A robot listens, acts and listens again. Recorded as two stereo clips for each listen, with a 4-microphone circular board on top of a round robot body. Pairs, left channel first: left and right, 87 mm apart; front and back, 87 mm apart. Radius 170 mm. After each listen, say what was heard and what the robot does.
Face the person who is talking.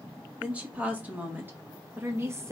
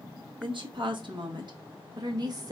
The woman speaking: 145° right. Turn 145° right.
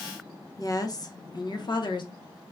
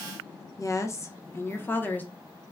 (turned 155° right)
The woman speaking is now 70° left. Turn 70° left.
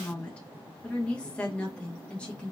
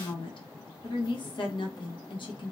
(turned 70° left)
The woman speaking is now 15° left. Turn 15° left.
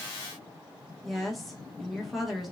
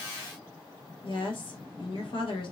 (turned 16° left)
Found it: a woman speaking, straight ahead, 1 to 2 m away.